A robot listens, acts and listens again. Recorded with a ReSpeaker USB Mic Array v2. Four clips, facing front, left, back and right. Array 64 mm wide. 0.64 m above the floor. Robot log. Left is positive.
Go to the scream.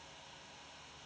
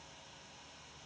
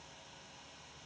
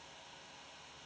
cmd idle
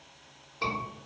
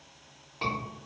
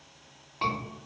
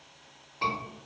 note: The scream: 155° left.
cmd yaw +155
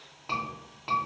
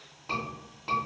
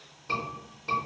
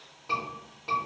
note: The scream is now 10° left.
cmd yaw +10
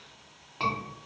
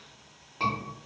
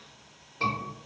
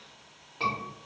cmd fwd 1.0
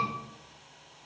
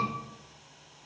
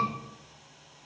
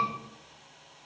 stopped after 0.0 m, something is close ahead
cmd idle
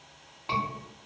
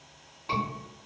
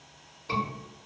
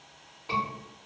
end: Something is in my way. I am facing the scream but have not reached it.